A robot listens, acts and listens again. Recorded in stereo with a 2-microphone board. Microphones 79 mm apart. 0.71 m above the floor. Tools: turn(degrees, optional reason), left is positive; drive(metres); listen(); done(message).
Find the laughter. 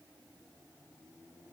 listen()
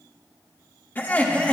turn(degrees=15, reason="The laughter: about 15° left or 165° left.")
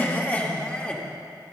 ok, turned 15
turn(degrees=30)
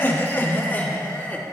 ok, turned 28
turn(degrees=25, reason="The laughter: about 25° left or 155° left.")
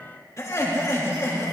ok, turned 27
turn(degrees=140, reason="So it is at 140° left.")
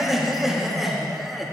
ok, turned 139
done("Facing the laughter.")